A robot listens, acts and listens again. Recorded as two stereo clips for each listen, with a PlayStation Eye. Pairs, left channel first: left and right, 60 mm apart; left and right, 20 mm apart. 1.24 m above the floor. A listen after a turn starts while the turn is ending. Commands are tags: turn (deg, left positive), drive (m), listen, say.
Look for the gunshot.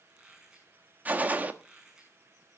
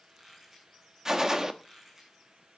<turn deg="-30"/>
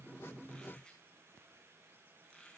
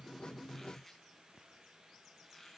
<listen/>
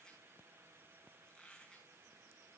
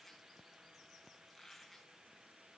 <say>I heard a gunshot, but can't make it out now. It was about straight ahead or 120° right.</say>